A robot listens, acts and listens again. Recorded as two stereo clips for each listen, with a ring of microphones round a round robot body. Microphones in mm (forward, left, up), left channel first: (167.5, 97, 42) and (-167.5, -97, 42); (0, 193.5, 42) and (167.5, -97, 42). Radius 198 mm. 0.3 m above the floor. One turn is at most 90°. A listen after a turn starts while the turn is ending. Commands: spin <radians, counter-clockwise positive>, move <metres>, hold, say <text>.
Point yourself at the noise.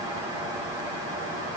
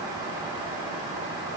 hold
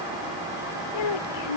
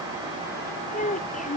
spin 0.87
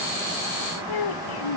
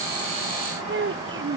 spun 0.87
say Found it: a child speaking, straight ahead.